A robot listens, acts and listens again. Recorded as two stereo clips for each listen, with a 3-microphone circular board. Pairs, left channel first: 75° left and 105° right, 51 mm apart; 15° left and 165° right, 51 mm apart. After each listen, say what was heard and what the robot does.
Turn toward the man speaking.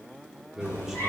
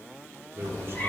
The man speaking: 175° left. Turn 175° left.
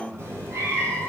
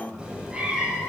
The man speaking is now 20° left. Turn 20° left.
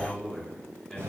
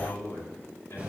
Found it: a man speaking, straight ahead, 2 to 4 m away.